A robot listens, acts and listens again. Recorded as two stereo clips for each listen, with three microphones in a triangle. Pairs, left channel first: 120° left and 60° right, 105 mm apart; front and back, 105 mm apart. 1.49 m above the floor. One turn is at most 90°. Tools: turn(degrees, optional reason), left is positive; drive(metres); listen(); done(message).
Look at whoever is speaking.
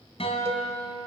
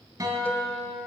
listen()
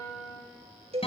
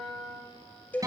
listen()
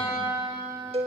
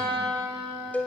done("I can't make out anyone speaking, only a guitar and a cowbell.")